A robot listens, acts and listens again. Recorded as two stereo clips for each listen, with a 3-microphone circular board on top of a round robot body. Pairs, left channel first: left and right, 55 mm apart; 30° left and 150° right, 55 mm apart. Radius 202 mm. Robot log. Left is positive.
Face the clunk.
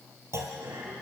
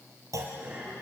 note: The clunk: 125° right.
cmd yaw -125
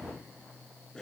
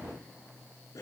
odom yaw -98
note: Nothing new. It was at 30° right.
cmd yaw -30
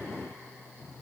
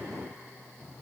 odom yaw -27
end: I heard a clunk from this way, but can't make it out now.